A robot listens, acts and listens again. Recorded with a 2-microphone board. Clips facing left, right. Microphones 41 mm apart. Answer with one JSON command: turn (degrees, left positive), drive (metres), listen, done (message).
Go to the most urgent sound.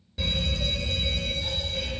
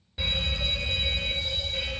{"turn": -20}
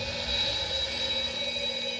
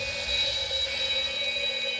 {"turn": -135}
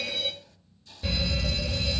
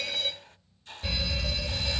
{"drive": 1.0}
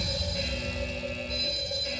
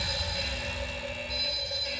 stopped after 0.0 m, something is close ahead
{"done": "Blocked. The fire alarm is further on, straight ahead."}